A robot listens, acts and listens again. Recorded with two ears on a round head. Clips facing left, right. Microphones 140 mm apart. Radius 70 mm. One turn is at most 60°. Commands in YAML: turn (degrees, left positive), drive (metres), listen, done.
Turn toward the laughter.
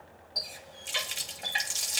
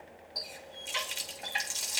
listen: true
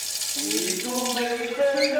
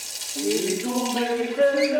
turn: -60
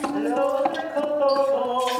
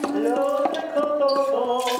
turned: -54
turn: -40
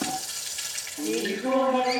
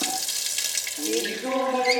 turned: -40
done: "Facing the laughter."